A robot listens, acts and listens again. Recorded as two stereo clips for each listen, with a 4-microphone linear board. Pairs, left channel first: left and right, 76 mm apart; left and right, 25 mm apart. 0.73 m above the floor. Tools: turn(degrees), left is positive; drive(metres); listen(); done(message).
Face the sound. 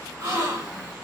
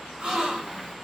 turn(degrees=-40)
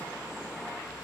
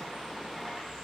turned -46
listen()
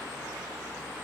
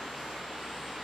done("I heard a gasp, but can't make it out now. It was about 5° left or 95° right.")